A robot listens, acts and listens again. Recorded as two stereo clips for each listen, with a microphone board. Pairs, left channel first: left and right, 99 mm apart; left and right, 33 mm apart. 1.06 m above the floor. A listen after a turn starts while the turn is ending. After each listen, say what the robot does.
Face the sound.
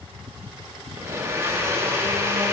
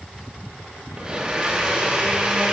Turn 25° right.
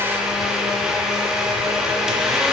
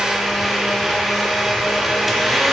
Facing the blender, under 1 m away.